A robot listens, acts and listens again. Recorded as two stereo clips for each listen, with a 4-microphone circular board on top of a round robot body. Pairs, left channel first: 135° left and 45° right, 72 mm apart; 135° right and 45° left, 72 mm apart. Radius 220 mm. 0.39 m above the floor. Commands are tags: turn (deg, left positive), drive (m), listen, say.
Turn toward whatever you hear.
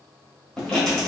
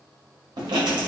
<turn deg="55"/>
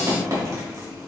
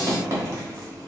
<say>Facing the writing, 1 to 2 m away.</say>